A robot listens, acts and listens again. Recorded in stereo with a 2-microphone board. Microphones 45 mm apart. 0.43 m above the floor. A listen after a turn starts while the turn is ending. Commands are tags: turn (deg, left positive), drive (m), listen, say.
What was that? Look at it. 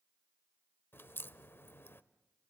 <turn deg="60"/>
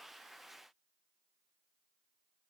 <listen/>
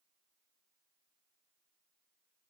<say>I heard a crack, but can't make it out now. It was about straight ahead or 60° left.</say>